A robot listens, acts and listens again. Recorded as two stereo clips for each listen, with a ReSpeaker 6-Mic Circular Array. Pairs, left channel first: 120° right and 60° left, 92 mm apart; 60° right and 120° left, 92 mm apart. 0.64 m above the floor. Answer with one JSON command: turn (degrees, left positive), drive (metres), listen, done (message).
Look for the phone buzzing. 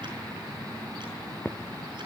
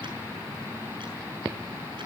{"listen": true}
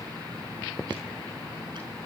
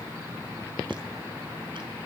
{"listen": true}
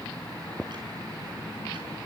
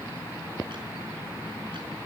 {"done": "I can't make out a phone buzzing to turn to."}